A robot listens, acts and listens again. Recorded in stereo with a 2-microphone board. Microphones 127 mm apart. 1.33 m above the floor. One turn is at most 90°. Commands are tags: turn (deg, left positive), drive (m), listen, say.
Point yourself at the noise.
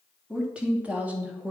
<turn deg="-30"/>
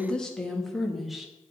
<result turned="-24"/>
<turn deg="30"/>
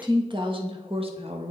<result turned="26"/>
<turn deg="-55"/>
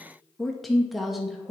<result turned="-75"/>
<say>Facing the woman speaking, 2 to 4 m away.</say>